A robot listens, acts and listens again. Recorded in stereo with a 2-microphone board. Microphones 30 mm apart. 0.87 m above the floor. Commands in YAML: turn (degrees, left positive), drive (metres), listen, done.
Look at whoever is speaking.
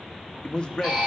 turn: 25
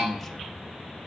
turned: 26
done: "Facing the man speaking, 1 to 2 m away."